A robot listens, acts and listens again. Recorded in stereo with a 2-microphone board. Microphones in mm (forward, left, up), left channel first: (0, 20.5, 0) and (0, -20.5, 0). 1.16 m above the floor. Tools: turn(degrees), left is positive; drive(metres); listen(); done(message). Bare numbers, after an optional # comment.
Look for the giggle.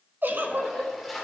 # The giggle: about 50° right or 130° right.
turn(-50)
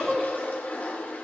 done("Found it: a giggle, straight ahead, 1 to 2 m away.")